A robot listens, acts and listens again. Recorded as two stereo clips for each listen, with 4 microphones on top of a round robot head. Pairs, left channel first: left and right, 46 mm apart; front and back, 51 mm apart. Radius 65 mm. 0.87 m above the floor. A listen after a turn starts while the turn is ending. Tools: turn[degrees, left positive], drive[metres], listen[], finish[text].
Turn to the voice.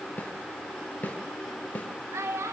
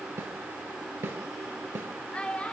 Thought: The child speaking: 75° right.
Action: turn[-75]
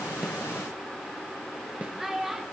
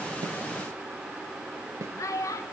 Thought: The child speaking is now 10° right.
Action: turn[-10]
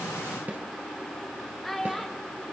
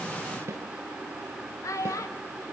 Action: finish[Found it: a child speaking, straight ahead, 1 to 2 m away.]